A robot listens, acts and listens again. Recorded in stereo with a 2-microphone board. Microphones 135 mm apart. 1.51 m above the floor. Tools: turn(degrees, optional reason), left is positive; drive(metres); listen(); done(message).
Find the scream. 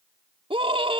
turn(degrees=-45, reason="The scream: about 45° right or 135° right.")
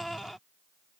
done("Found it: a scream, straight ahead.")